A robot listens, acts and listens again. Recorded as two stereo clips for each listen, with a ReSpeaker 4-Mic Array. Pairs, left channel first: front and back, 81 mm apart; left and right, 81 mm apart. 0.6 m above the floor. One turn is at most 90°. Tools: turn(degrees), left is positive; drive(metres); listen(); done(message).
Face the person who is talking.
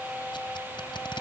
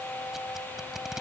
listen()
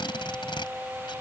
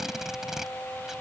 listen()
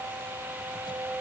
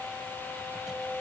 done("I can't make out anyone speaking, only tape being pulled.")